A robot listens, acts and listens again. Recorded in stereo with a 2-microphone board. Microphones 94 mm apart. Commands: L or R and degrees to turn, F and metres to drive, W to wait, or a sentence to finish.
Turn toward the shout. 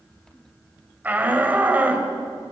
R15
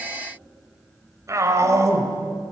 R150
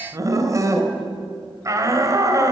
R35
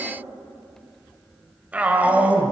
R15
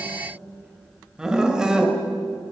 R10
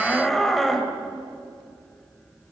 Found it: a shout, straight ahead, 2 to 4 m away.